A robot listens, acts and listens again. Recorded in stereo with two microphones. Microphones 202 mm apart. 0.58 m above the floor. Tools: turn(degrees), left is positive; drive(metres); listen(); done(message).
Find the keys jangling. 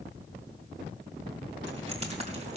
turn(degrees=-35)
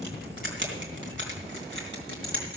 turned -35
turn(degrees=-110)
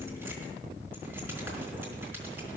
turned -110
listen()
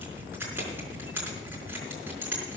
turn(degrees=-10)
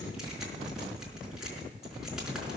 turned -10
done("Facing the keys jangling.")